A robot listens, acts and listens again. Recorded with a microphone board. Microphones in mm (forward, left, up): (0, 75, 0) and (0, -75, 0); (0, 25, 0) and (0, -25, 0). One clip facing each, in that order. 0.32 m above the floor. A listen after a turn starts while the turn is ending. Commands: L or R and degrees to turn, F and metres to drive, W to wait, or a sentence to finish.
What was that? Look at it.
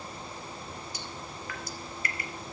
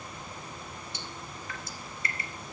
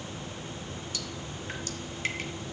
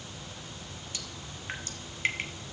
R25
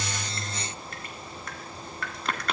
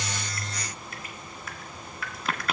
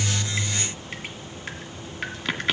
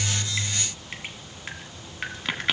Facing the dripping, 1 to 2 m away.